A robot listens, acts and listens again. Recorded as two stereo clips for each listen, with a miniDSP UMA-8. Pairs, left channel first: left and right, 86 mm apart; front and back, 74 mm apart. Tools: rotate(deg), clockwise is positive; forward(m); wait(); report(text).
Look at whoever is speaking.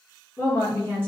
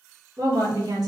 rotate(-155)
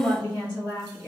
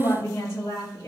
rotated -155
rotate(-20)
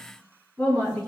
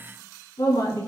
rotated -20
report("Facing the woman speaking, 2 to 4 m away.")